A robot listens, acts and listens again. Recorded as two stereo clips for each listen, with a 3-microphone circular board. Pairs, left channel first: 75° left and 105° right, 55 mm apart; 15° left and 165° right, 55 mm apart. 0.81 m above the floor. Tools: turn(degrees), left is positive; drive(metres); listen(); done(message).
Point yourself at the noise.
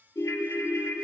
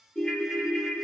turn(degrees=95)
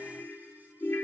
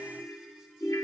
turn(degrees=25)
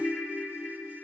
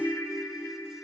done("Facing the ringtone, under 1 m away.")